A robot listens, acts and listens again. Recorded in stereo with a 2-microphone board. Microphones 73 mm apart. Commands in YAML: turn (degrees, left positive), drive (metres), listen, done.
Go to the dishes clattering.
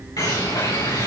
listen: true
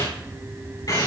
listen: true
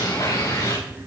done: "I can't make out dishes clattering to turn to."